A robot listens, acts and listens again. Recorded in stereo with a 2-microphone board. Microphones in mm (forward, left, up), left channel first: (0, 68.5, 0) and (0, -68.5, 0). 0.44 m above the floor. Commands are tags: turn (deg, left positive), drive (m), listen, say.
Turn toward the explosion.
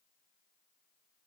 <listen/>
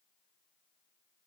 <listen/>
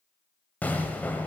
<turn deg="30"/>
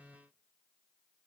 <listen/>
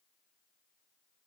<say>I heard an explosion, but can't make it out now. It was about 20° right or 140° left.</say>